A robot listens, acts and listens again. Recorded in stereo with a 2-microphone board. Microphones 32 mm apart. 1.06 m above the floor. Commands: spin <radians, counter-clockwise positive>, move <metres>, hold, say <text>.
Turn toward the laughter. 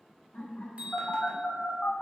spin 1.31
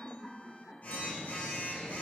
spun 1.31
spin 0.79
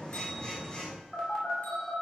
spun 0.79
hold
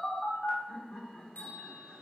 spin 0.52
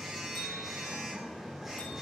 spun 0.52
hold
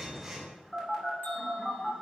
hold
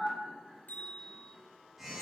say Facing the laughter.